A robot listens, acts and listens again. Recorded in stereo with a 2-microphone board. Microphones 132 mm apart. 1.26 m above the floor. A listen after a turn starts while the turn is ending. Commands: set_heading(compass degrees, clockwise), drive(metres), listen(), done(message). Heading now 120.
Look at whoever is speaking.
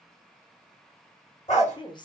set_heading(85)
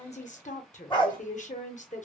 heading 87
set_heading(337)
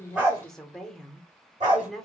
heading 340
done("Found it: a woman speaking, straight ahead.")